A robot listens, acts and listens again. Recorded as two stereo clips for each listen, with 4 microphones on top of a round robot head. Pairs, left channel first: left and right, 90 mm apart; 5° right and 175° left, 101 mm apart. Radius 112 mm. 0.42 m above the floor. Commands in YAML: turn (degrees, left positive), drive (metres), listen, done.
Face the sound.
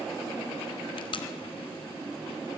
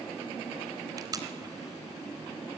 turn: 120
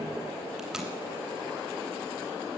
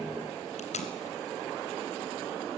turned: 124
done: "Facing the tape being pulled, 2 to 4 m away."